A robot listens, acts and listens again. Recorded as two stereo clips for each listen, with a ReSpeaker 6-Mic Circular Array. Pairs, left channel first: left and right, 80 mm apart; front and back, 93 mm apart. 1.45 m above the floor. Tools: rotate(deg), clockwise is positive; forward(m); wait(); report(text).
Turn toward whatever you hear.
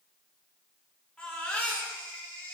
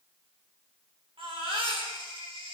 rotate(-165)
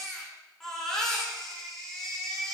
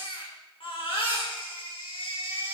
report("Facing the baby crying.")